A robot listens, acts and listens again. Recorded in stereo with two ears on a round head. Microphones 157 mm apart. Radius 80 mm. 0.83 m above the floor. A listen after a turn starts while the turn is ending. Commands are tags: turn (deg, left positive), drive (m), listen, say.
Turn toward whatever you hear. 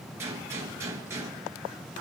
<turn deg="-15"/>
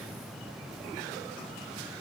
<listen/>
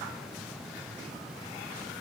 <say>I heard a gunshot, but can't make it out now. It was about straight ahead or 150° right.</say>